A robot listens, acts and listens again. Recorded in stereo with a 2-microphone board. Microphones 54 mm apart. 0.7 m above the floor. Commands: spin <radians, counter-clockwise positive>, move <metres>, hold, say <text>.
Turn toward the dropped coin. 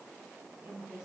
hold
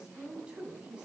hold
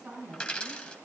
spin 0.35
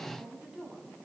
hold
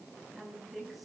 say I heard a dropped coin, but can't make it out now. It was about straight ahead or 140° left.